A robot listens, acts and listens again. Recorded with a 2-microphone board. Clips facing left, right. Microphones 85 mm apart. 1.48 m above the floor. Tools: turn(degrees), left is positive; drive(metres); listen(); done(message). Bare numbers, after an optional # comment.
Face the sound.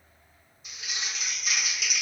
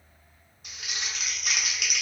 # The crumpling: about 60° right or 120° right.
turn(-60)
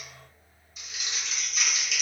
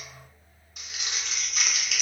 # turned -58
# So it is at 60° right.
turn(-60)
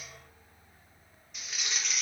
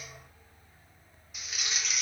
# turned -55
done("Facing the crumpling, under 1 m away.")